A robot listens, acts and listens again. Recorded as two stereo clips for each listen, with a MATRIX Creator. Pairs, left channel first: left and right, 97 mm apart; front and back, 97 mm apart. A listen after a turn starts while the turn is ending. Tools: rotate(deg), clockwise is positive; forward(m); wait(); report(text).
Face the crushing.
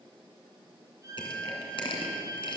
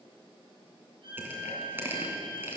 rotate(-115)
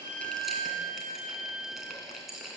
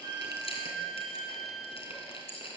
report("Facing the crushing.")